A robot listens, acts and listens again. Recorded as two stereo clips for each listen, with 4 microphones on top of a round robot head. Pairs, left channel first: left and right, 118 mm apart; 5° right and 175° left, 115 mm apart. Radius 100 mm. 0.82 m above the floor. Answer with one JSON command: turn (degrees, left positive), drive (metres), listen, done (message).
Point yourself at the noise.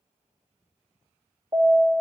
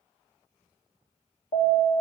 {"turn": -35}
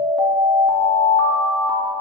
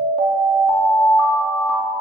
{"done": "Facing the alarm."}